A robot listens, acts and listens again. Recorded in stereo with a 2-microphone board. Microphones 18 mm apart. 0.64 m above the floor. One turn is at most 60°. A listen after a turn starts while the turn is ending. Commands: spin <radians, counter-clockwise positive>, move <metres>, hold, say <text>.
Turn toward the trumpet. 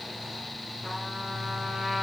spin -0.52
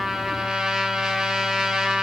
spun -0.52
spin -1.05
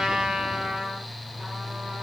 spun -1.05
spin -1.05
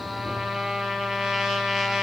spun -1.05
spin -0.87
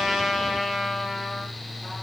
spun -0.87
spin -0.26
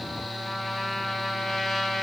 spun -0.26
say Found it: a trumpet, straight ahead.